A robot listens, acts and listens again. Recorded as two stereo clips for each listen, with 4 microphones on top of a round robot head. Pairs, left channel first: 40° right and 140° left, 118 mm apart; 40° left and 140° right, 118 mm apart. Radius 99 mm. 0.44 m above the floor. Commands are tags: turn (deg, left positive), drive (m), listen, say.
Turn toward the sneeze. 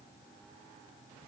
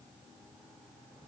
<listen/>
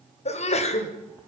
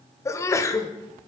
<turn deg="-20"/>
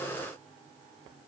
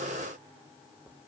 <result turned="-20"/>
<say>I heard a sneeze from this way, but can't make it out now.</say>